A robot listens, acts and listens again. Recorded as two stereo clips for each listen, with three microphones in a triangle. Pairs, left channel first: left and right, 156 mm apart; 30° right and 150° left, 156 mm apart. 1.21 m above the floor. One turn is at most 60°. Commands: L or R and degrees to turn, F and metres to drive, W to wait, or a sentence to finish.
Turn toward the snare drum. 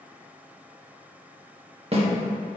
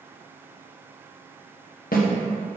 R40
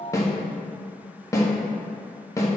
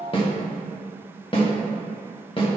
L20
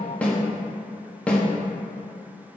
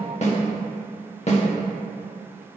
L10
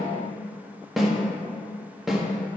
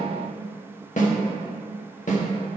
Facing the snare drum, 1 to 2 m away.